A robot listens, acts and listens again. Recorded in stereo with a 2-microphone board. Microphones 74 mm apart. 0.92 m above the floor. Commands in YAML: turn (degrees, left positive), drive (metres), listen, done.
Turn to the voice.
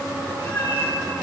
listen: true
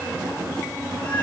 listen: true
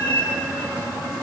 done: "I can't make out anyone speaking, only a cat meowing."